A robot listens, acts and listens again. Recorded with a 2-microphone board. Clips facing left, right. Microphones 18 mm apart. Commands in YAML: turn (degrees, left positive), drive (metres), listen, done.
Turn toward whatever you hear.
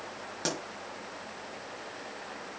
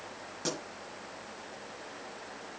turn: 40
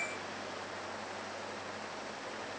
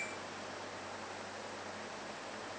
listen: true
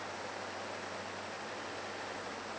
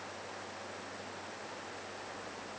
done: "I heard a pop, but can't make it out now. It was about straight ahead or 100° left."